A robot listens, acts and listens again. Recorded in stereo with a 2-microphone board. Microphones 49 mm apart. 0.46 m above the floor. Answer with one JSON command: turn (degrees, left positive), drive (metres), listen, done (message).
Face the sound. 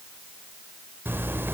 {"turn": -45}
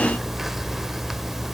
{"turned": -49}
{"done": "Found it: a zipper, straight ahead, 1 to 2 m away."}